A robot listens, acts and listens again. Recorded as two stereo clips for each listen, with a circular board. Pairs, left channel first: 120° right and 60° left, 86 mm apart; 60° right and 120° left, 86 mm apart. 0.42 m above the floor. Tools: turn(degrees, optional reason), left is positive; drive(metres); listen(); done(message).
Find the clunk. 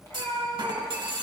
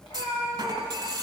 turn(degrees=85, reason="The clunk: 85° left.")
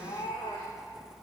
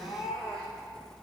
done("I heard a clunk from this way, but can't make it out now.")